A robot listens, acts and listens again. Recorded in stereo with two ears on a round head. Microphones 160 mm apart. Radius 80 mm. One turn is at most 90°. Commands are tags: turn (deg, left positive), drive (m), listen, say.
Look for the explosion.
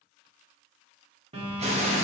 <turn deg="-35"/>
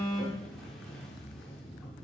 <listen/>
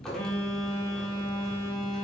<say>I heard an explosion, but can't make it out now. It was about straight ahead or 110° right.</say>